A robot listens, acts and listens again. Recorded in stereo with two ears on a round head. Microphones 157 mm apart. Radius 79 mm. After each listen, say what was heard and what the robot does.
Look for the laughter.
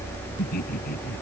The laughter: about 55° left or 125° left. Turn 55° left.
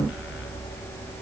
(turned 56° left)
Keep listening.
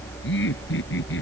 So it is at 70° left. Turn 70° left.
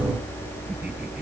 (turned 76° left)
Nothing new. It was at 10° right. Turn 10° right.
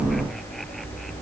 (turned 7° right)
Keep listening.
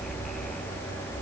Facing where the laughter came from. I can't hear it now.